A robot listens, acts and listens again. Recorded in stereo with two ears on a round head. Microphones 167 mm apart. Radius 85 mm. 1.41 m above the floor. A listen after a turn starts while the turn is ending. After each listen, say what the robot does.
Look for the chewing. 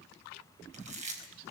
Turn 40° right.
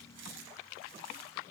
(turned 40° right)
Keep listening.
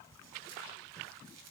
Keep listening.
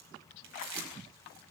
Turn 100° right.
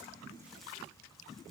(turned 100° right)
Keep listening.
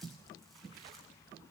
Keep listening.
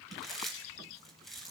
Facing the chewing, over 4 m away.